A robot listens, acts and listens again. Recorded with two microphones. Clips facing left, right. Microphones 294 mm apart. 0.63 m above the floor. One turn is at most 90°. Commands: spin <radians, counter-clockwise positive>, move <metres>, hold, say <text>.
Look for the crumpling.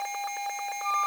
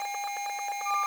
hold
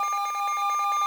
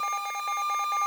hold
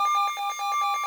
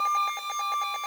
say I can't make out crumpling, only a flute.